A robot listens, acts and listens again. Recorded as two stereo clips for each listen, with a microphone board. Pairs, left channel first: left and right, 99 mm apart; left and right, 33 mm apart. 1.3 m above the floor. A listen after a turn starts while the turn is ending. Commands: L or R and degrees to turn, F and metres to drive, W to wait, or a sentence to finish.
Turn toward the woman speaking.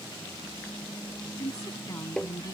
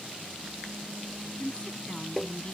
L35
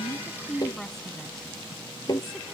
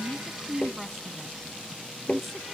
Found it: a woman speaking, straight ahead.